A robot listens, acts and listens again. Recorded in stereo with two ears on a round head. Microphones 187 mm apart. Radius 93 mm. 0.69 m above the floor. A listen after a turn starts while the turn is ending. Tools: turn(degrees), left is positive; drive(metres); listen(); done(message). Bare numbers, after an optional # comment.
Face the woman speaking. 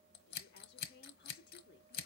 # The woman speaking: about 50° left or 130° left.
turn(50)
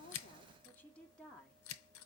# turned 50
done("Found it: a woman speaking, straight ahead, 1 to 2 m away.")